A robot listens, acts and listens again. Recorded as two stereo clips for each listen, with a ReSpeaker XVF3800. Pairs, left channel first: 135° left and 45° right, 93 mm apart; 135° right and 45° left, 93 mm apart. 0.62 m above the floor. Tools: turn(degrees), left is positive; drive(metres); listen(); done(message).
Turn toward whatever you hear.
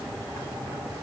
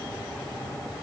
listen()
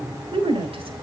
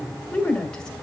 turn(degrees=-55)
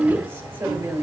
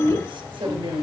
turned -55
turn(degrees=25)
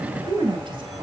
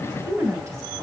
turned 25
turn(degrees=-10)
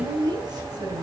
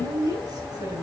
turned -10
done("Facing the woman speaking, over 4 m away.")